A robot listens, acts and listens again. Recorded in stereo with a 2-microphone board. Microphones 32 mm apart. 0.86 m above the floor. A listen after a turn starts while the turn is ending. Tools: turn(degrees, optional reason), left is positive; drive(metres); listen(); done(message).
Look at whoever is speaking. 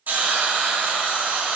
listen()
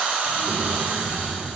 turn(degrees=30, reason="The child speaking: about 30° left or 150° left.")
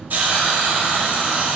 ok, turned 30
listen()
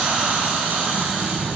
turn(degrees=120, reason="So it is at 120° left.")
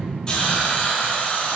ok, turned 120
listen()
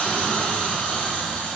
listen()
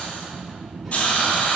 turn(degrees=10, reason="The child speaking is now 10° left.")
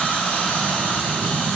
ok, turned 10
done("Facing the child speaking, 2 to 4 m away.")